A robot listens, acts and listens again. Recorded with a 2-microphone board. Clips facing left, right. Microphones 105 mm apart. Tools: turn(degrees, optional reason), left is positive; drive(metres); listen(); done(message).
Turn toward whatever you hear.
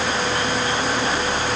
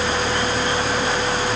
listen()
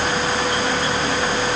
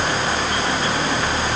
listen()
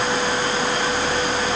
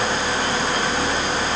done("I can't make out anything.")